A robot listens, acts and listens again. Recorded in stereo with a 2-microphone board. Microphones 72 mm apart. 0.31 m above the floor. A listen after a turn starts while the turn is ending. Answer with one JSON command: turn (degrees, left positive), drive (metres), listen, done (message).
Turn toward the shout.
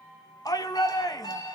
{"turn": 60}
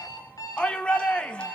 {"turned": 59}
{"turn": 15}
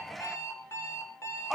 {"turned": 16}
{"done": "Found it: a shout, straight ahead."}